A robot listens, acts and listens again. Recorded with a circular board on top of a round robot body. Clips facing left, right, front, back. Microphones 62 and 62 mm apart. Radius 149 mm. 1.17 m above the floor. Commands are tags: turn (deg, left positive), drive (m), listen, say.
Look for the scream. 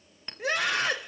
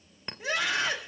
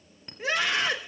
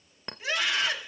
<turn deg="55"/>
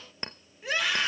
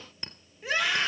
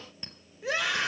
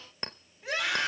<say>Facing the scream, over 4 m away.</say>